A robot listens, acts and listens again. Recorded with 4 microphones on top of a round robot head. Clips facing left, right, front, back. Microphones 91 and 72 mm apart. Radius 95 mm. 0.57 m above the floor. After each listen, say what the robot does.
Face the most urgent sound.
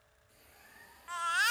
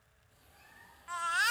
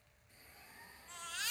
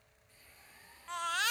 Turn 180° left.
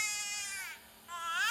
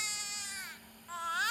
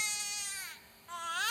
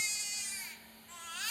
Turn 15° right.
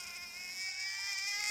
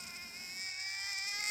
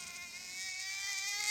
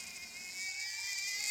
Found it: a baby crying, straight ahead.